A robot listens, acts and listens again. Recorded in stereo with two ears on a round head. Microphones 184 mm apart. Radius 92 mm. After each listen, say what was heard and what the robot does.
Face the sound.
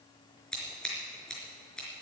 Turn 30° left.
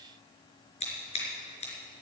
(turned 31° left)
So it is at 145° left. Turn 145° left.
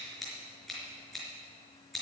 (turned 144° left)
Facing the scissors, over 4 m away.